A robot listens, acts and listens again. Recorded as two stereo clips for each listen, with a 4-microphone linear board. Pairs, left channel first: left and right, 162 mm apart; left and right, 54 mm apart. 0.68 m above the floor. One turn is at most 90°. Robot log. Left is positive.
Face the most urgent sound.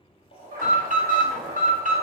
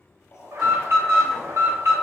note: The alarm: about 50° right or 130° right.
cmd yaw -50
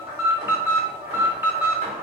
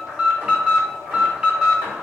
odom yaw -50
note: So it is at 15° right.
cmd yaw -15
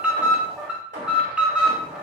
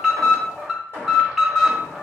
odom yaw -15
end: Facing the alarm, under 1 m away.